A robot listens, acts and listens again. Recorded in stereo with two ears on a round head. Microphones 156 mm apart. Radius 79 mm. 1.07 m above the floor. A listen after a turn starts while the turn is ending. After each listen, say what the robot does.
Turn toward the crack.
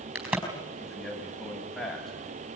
Turn 30° right.
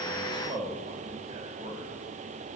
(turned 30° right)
Keep listening.
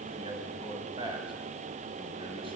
I heard a crack, but can't make it out now. It was about 20° left or 140° right.